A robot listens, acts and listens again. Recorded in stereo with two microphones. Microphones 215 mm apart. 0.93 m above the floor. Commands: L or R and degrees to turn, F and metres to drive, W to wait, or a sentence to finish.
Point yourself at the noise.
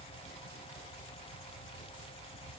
W
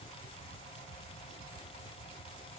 W
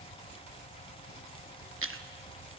R90
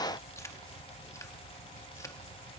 W
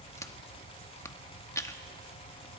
L15
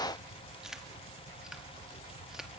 Facing the chewing, 1 to 2 m away.